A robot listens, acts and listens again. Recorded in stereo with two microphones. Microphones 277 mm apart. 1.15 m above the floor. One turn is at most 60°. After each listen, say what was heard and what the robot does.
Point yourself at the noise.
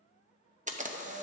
The camera shutter: about 25° right or 155° right. Turn 25° right.
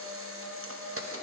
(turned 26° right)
So it is at 125° right. Turn 60° right.
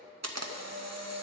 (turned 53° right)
The camera shutter is now 75° right. Turn 60° right.
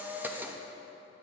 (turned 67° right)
Found it: a camera shutter, straight ahead.